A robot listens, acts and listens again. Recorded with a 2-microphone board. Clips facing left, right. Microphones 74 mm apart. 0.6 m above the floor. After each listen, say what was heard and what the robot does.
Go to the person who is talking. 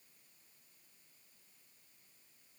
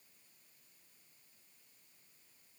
Keep listening.
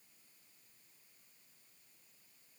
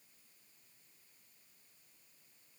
Keep listening.
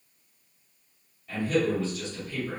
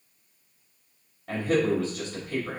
The man speaking: about 65° right or 115° right. Turn 65° right.
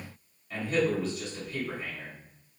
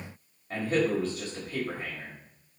So it is at 40° right. Turn 40° right.
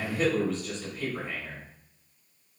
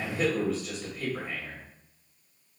Drive 1.0 m forward.
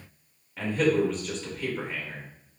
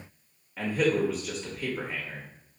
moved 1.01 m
Drive 1.0 m forward.
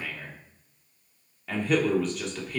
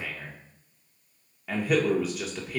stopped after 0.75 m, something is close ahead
Arrived at the man speaking, straight ahead.